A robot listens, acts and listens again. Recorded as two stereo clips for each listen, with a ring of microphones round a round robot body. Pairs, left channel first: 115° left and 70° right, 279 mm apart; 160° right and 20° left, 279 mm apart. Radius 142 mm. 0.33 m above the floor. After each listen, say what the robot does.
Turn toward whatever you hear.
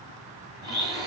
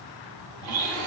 Turn 10° left.
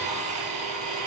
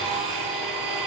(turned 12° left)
Found it: a blender, straight ahead.